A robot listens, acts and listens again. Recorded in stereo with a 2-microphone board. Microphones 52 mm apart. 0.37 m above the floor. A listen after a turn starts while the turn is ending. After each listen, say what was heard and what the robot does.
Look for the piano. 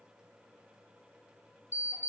Keep listening.
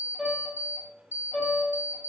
Turn 30° left.
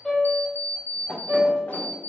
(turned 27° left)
So it is at 25° right. Turn 25° right.
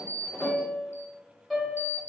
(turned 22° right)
Facing the piano.